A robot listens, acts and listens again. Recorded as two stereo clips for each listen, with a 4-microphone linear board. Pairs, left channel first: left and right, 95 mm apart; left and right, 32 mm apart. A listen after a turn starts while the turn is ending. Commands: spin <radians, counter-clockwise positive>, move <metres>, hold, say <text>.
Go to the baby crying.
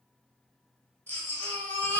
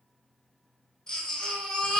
spin 0.35
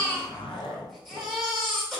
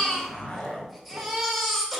move 1.0
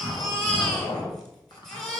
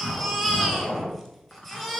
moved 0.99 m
move 1.0
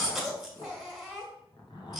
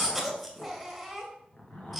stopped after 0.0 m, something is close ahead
say Arrived at the baby crying, straight ahead.